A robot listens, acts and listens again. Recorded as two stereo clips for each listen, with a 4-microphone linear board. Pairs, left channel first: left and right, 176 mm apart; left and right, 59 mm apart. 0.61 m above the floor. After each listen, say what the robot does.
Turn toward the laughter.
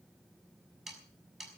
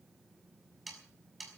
Keep listening.
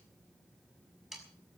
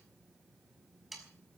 Keep listening.
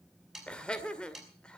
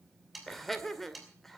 Turn 30° left.
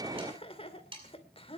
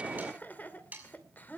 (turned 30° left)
Turn 145° left.
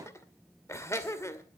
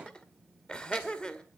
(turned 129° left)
Turn 15° left.
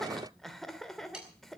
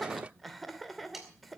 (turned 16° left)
Facing the laughter.